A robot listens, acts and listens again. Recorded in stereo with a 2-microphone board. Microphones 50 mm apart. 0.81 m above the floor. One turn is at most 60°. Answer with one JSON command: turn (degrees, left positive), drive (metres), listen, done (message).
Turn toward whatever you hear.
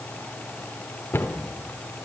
{"turn": 50}
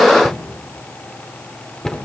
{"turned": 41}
{"turn": 10}
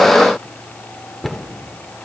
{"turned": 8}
{"done": "Facing the cupboard door."}